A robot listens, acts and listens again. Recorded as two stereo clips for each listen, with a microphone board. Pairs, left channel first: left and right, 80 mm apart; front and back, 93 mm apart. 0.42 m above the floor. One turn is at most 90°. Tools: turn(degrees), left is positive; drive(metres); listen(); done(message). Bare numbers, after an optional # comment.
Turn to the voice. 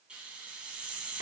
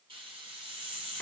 listen()
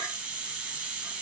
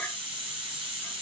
listen()
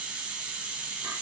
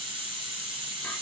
done("I can't make out anyone speaking to turn to.")